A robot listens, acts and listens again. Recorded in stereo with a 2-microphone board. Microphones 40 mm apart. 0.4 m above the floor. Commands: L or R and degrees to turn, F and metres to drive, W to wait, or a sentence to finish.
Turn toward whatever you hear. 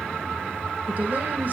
W
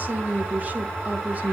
R40
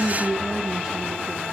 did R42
R10
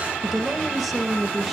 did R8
Found it: a woman speaking, straight ahead, 1 to 2 m away.